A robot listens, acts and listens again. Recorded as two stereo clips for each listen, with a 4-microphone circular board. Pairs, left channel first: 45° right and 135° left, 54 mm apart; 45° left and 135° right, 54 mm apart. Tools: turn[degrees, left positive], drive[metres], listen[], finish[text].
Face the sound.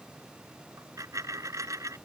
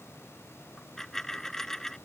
Thought: The dropped coin: 125° left.
Action: turn[125]
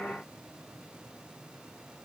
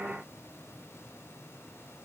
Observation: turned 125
Action: finish[Facing where the dropped coin came from. I can't hear it now.]